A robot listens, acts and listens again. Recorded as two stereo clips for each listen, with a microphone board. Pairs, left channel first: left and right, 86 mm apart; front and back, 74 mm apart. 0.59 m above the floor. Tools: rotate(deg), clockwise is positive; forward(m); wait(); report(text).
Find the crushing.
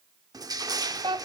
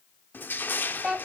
rotate(60)
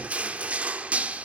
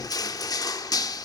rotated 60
rotate(20)
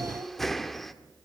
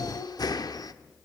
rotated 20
report("Found it: crushing, straight ahead, 1 to 2 m away.")